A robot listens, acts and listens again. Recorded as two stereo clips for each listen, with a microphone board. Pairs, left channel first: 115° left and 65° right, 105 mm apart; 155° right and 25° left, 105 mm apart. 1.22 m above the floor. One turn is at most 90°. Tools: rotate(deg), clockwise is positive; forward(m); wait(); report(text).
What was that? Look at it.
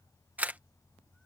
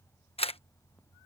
rotate(90)
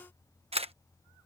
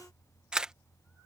rotate(60)
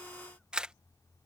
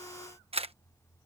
rotate(-15)
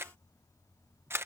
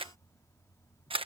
report("Found it: a camera shutter, straight ahead.")